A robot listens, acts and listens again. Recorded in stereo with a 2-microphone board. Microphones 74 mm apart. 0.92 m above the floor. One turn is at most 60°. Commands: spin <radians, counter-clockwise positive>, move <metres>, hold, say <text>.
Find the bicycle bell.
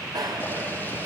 spin -1.05
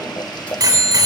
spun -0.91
spin -1.05
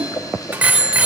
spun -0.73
spin -0.35
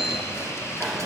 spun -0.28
hold
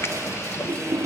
hold
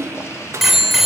say Found it: a bicycle bell, straight ahead, 2 to 4 m away.